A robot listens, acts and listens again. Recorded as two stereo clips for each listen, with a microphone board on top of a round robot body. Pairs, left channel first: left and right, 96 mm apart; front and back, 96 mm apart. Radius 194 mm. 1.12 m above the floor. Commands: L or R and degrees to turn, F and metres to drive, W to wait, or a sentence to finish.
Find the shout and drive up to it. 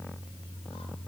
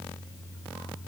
W
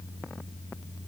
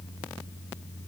W
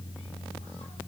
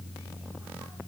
I can't make out a shout.